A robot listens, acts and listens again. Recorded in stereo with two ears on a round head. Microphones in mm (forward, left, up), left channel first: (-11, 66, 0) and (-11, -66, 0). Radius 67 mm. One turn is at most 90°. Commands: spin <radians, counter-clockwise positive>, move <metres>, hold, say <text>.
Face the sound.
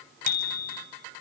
spin 1.05
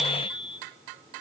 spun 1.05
say Found it: a bicycle bell, straight ahead, 2 to 4 m away.